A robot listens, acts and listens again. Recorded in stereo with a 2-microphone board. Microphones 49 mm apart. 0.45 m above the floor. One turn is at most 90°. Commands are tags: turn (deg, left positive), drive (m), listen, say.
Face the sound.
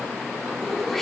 <turn deg="30"/>
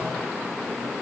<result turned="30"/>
<listen/>
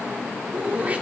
<turn deg="-30"/>
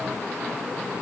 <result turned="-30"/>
<listen/>
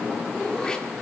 <turn deg="15"/>
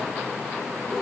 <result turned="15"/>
<listen/>
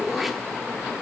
<say>Facing the throat clearing.</say>